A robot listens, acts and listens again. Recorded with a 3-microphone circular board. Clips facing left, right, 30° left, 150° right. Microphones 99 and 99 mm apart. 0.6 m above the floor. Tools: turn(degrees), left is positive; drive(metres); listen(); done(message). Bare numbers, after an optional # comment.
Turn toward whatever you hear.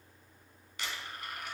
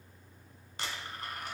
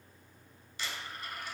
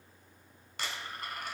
# The dropped coin: 140° right.
turn(-140)
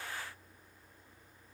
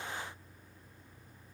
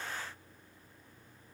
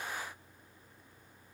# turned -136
done("I heard a dropped coin from this way, but can't make it out now.")